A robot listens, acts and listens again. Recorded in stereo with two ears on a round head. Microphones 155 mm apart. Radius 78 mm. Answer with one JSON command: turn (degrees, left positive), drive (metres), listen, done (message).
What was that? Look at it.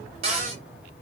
{"turn": -40}
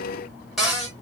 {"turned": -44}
{"done": "Facing the cupboard door, 1 to 2 m away."}